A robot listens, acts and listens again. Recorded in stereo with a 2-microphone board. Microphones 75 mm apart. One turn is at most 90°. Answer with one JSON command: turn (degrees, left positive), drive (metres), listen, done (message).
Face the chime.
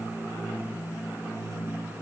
{"listen": true}
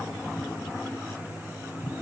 {"listen": true}
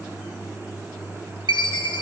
{"turn": 90}
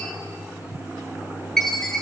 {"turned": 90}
{"done": "Found it: a chime, straight ahead."}